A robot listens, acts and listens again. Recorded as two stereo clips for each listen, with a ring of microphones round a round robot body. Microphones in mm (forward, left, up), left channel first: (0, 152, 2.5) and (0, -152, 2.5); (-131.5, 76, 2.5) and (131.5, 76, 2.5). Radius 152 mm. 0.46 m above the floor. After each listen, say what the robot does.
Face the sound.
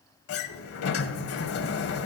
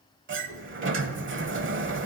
Turn 45° left.
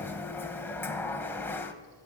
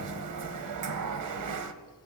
Found it: a sliding door, straight ahead.